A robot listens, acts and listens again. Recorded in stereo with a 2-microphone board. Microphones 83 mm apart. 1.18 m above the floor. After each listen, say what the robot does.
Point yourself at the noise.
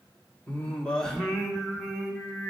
Turn 30° right.
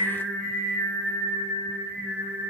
Turn 30° right.
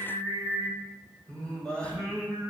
Turn 10° left.
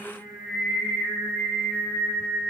Found it: singing, straight ahead, 2 to 4 m away.